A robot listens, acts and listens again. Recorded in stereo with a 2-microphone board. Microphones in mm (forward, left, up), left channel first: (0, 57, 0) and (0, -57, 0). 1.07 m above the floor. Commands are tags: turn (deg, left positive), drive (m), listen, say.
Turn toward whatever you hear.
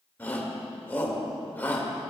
<turn deg="15"/>
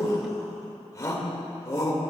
<turn deg="150"/>
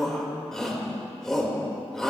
<say>Facing the shout.</say>